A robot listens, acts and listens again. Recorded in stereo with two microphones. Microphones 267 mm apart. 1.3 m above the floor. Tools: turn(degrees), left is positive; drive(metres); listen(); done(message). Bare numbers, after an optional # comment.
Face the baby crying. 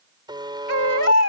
# The baby crying: about 65° left or 115° left.
turn(65)
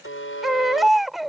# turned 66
done("Found it: a baby crying, straight ahead.")